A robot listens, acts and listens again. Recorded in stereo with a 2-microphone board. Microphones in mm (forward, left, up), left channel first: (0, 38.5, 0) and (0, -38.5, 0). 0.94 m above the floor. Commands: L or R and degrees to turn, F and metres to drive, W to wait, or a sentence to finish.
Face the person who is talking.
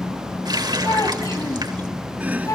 L50
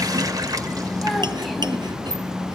W
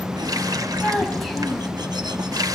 Found it: a child speaking, straight ahead.